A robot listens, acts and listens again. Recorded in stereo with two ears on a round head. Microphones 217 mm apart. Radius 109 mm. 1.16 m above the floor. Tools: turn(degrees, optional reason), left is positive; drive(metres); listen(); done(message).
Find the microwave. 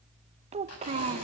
listen()
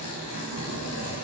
listen()
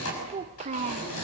done("I can't make out a microwave, only a child speaking and tearing paper.")